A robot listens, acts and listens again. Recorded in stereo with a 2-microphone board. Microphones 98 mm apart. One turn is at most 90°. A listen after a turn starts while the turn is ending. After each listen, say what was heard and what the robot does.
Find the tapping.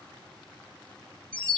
Keep listening.
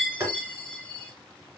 The tapping: about 35° right or 145° right. Turn 35° right.
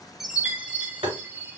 So it is at 110° right. Turn 90° right.
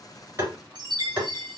The tapping is now 20° right. Turn 20° right.
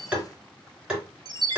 The tapping is now 10° right. Turn 10° right.
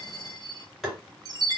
Found it: tapping, straight ahead.